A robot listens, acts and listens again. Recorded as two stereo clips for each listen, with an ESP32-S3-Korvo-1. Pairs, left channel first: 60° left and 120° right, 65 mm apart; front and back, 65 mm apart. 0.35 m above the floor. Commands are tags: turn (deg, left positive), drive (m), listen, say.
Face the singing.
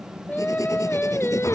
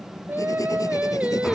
<turn deg="105"/>
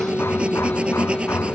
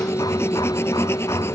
<listen/>
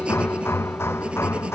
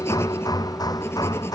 <listen/>
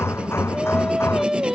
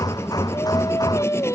<turn deg="-35"/>
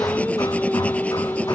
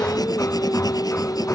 <say>Facing the singing.</say>